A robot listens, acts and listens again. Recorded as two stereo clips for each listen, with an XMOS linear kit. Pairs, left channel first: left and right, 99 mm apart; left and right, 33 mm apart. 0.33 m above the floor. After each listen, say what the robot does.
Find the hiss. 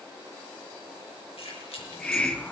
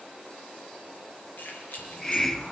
Turn 30° left.
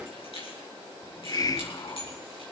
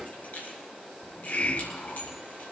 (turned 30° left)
Turn 140° left.
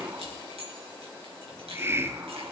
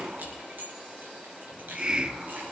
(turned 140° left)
Turn 25° right.
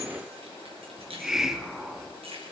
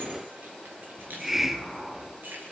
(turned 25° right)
Facing the hiss.